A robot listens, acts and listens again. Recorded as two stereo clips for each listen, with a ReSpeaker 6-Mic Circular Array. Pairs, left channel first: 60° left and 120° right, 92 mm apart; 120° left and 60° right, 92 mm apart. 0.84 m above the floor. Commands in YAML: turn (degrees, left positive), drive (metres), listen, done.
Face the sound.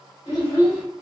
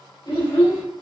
turn: 110
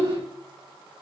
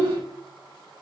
done: "Facing the child speaking, 1 to 2 m away."